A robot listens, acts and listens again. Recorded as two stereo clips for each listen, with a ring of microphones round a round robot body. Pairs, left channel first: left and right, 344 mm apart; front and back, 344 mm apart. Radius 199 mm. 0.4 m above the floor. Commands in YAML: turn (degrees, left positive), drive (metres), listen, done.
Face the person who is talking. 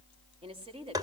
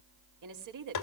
turn: -165
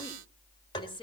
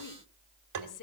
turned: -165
turn: 15
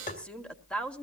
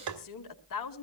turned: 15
done: "Facing the woman speaking, 1 to 2 m away."